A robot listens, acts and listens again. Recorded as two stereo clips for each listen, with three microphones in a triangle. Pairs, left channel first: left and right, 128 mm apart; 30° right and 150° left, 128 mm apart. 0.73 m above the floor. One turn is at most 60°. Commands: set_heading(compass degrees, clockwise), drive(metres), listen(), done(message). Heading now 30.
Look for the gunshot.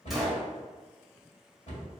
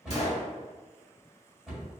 done("Found it: a gunshot, straight ahead.")